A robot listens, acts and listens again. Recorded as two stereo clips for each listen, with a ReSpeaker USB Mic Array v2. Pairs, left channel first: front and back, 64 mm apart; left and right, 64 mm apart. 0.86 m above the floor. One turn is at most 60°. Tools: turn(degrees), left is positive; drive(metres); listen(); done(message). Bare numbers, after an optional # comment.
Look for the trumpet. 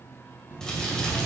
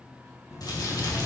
listen()
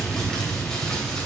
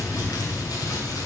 listen()
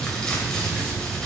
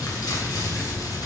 done("I can't make out a trumpet, only crumpling and chewing.")